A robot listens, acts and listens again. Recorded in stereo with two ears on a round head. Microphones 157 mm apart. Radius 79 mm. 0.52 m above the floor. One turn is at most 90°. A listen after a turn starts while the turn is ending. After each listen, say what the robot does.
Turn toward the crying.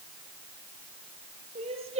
Turn 35° right.
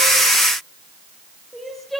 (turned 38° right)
Found it: crying, straight ahead, over 4 m away.